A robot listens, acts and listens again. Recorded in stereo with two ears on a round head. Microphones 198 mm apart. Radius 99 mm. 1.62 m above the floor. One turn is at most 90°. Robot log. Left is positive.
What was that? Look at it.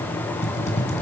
note: The typing on a keyboard: about 30° left or 150° left.
cmd yaw +30
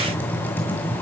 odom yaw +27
note: So it is at 10° left.
cmd yaw +10
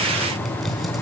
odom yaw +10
end: Found it: typing on a keyboard, straight ahead.